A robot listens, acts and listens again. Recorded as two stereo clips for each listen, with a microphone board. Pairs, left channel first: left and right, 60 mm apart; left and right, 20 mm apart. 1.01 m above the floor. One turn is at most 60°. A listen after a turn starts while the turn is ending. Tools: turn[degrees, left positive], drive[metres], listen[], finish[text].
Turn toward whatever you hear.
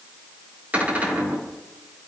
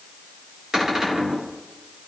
Thought: The cupboard door: about 25° right or 155° right.
Action: turn[-25]
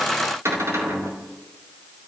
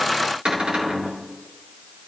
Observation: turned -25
Thought: So it is at 125° right.
Action: turn[-60]
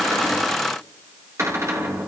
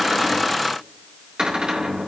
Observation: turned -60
Thought: The cupboard door is now 55° right.
Action: turn[-55]
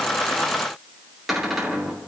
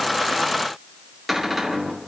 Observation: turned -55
Action: finish[Found it: a cupboard door, straight ahead, 2 to 4 m away.]